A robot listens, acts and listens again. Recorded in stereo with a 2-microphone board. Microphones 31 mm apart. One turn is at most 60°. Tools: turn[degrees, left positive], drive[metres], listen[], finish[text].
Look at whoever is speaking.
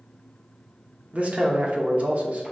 Thought: The man speaking: about 50° right or 130° right.
Action: turn[-50]
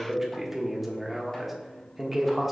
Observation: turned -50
Thought: So it is at 15° right.
Action: turn[-15]
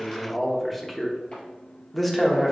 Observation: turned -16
Action: finish[Found it: a man speaking, straight ahead, under 1 m away.]